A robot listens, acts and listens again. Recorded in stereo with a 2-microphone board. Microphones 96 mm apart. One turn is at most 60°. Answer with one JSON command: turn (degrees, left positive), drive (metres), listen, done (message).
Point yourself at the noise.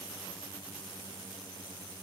{"listen": true}
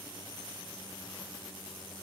{"listen": true}
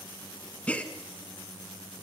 {"turn": 30}
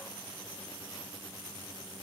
{"listen": true}
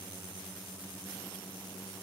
{"done": "I heard a gasp, but can't make it out now. It was about 15° right or 135° left."}